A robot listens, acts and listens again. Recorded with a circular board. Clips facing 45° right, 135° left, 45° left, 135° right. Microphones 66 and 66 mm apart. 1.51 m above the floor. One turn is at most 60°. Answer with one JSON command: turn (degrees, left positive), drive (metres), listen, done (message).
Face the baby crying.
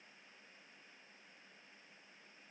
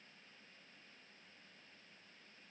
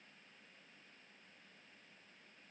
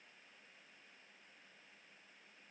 {"listen": true}
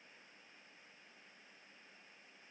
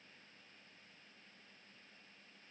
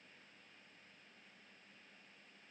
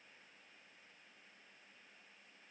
{"listen": true}
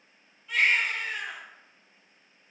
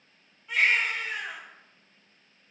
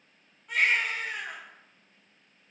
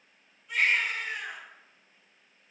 {"turn": 60}
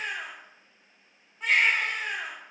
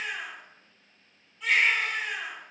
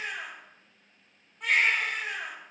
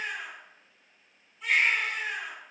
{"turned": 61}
{"turn": 10}
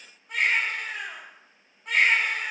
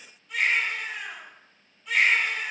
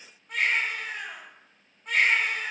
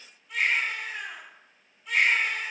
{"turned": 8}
{"done": "Found it: a baby crying, straight ahead, 1 to 2 m away."}